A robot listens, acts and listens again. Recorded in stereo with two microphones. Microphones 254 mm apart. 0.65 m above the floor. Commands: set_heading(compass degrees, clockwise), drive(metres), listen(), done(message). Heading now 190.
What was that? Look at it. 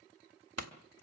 set_heading(280)
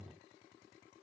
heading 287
done("I heard a pop from this way, but can't make it out now.")